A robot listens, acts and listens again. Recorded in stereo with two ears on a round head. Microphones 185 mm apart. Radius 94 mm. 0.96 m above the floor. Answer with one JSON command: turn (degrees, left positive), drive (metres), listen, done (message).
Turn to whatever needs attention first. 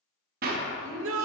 {"turn": -70}
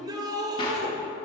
{"turn": -20}
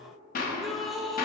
{"done": "Found it: a shout, straight ahead."}